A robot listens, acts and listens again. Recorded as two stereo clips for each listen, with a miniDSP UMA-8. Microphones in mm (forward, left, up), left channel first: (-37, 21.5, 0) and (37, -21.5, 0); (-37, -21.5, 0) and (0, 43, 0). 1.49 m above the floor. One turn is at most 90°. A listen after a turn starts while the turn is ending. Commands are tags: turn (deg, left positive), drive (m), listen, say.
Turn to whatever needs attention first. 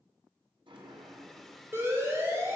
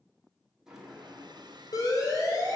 <turn deg="-90"/>
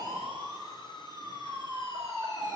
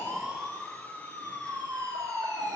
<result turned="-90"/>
<turn deg="20"/>
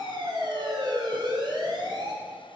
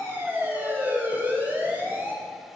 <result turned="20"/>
<say>Facing the siren.</say>